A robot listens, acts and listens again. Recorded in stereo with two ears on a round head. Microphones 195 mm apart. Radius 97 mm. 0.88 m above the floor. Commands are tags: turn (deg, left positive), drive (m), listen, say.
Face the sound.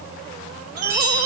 <turn deg="-90"/>
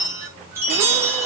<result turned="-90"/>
<turn deg="-10"/>
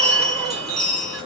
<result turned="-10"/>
<say>Facing the chime, over 4 m away.</say>